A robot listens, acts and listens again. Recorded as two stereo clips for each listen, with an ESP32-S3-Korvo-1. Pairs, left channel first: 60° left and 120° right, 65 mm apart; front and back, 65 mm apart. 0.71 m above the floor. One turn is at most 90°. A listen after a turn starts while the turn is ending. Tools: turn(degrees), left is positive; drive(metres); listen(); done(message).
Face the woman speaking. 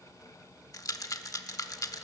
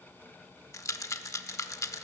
listen()
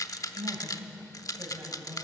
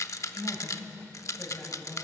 turn(degrees=-60)
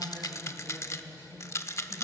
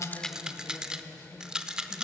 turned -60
done("Facing the woman speaking, over 4 m away.")